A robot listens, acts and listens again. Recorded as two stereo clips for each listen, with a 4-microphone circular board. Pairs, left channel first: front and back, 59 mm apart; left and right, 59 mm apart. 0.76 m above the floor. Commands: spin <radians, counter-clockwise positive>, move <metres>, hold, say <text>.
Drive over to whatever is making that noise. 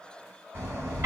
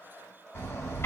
spin 2.36
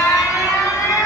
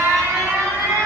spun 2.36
spin -0.44
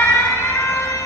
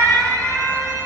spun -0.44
spin 0.26
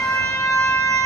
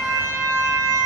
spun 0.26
move 1.0
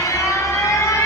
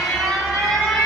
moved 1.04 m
move 1.0
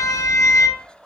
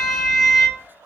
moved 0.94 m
move 1.0
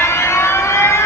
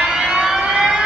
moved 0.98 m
spin -0.26
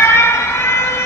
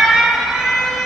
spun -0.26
move 1.0
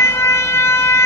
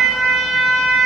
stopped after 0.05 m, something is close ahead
spin -0.17
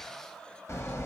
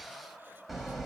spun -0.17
say I am next to the alarm.